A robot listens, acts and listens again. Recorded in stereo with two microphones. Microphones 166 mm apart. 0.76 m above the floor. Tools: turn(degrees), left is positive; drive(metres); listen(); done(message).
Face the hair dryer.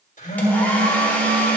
turn(degrees=30)
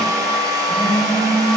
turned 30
turn(degrees=-20)
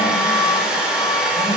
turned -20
done("Facing the hair dryer.")